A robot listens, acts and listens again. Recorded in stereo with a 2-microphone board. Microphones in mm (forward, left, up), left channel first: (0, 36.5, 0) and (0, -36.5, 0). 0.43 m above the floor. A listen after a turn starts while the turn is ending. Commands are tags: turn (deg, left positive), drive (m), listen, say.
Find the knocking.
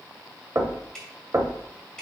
<turn deg="-40"/>
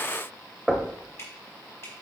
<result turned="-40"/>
<turn deg="-10"/>
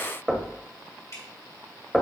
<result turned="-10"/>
<say>Facing the knocking, 1 to 2 m away.</say>